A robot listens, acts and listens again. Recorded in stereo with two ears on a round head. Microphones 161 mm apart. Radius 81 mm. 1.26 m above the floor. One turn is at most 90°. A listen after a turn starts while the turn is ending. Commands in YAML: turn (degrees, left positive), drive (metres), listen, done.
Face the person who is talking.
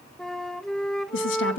turn: 90
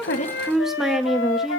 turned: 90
done: "Found it: a woman speaking, straight ahead, 1 to 2 m away."